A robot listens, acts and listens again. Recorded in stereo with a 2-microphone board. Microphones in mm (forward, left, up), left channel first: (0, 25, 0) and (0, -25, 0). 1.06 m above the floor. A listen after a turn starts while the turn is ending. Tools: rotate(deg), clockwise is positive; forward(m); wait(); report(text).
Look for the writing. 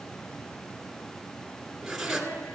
rotate(30)
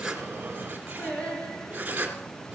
rotate(145)
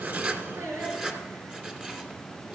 rotate(20)
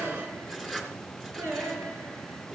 rotate(10)
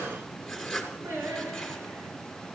report("Found it: writing, straight ahead.")